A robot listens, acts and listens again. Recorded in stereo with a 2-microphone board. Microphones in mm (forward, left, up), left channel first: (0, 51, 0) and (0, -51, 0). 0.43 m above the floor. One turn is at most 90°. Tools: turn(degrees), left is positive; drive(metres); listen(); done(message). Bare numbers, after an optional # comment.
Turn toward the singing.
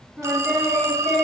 turn(-30)
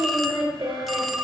# So it is at 130° right.
turn(-90)
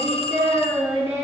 # The singing is now 20° right.
turn(-20)
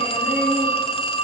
listen()
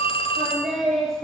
done("Facing the singing, 2 to 4 m away.")